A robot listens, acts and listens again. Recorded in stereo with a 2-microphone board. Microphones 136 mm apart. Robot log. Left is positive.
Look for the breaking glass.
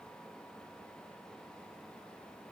cmd idle
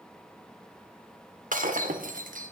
cmd yaw -90
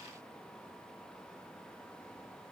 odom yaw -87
end: Facing where the breaking glass came from. I can't hear it now.